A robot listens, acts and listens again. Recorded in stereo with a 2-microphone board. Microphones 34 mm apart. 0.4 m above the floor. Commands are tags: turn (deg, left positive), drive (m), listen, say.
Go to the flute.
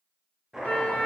<turn deg="65"/>
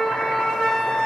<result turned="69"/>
<turn deg="15"/>
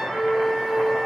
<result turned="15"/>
<drive m="1.0"/>
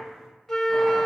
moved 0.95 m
<turn deg="10"/>
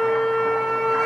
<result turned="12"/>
<drive m="1.0"/>
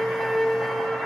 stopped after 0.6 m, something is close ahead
<say>Arrived at the flute, straight ahead.</say>